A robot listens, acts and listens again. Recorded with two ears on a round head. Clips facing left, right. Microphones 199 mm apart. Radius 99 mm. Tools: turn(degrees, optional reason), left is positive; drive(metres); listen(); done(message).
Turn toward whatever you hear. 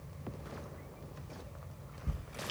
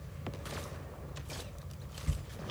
turn(degrees=35, reason="The ticking: about 35° left or 145° left.")
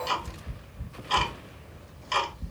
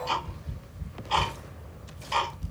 turn(degrees=110, reason="So it is at 110° left.")
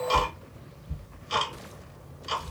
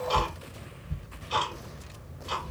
turn(degrees=35, reason="The ticking is now 35° left.")
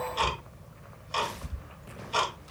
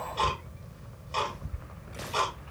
turn(degrees=20, reason="The ticking is now 20° left.")
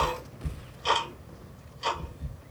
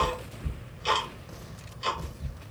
done("Facing the ticking.")